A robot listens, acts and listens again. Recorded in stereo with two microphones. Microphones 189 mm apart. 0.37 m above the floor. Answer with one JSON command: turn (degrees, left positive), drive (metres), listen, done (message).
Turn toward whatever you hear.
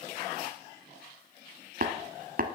{"turn": -55}
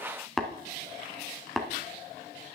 {"done": "Facing the tapping, 1 to 2 m away."}